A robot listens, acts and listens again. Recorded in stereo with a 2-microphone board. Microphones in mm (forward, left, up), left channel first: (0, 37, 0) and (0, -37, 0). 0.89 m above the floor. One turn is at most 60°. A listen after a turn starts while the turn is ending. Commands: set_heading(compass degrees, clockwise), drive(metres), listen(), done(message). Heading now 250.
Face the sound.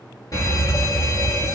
set_heading(200)
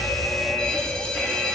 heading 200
set_heading(190)
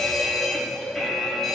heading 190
done("Facing the fire alarm.")